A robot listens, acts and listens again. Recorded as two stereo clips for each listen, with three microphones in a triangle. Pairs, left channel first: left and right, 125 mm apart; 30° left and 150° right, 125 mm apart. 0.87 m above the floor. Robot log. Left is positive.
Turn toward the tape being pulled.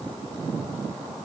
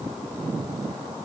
cmd idle
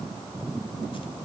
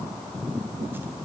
cmd idle
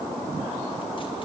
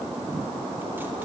end: I can't make out tape being pulled to turn to.